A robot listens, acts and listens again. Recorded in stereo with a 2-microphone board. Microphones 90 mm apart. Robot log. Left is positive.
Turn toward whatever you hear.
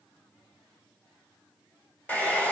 note: The hair dryer: about 15° left or 165° left.
cmd yaw +15
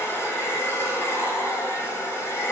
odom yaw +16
note: So it is at 150° left.
cmd yaw +150
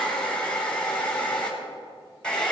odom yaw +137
note: The hair dryer is now 10° left.
cmd yaw +10
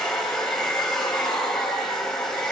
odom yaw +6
end: Found it: a hair dryer, straight ahead.